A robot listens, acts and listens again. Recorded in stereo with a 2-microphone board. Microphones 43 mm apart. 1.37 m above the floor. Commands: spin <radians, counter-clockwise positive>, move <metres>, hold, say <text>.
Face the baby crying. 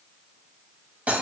hold
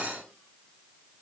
hold
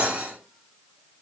say I can't make out a baby crying, only cutlery clinking.